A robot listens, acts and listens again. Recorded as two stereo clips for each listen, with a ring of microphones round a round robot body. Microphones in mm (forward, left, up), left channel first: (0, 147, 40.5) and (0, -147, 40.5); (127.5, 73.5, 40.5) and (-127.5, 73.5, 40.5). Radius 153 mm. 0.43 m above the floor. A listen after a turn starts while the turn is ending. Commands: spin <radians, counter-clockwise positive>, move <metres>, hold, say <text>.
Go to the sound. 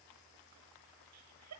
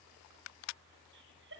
spin -2.18
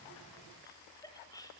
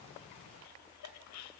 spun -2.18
spin 0.17
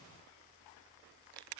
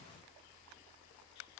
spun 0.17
hold
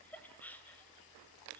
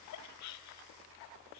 move 1.0
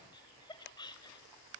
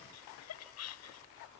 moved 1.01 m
spin 0.26
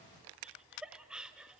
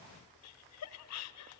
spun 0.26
move 1.0
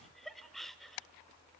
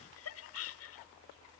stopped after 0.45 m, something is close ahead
say Arrived at the laughter, straight ahead.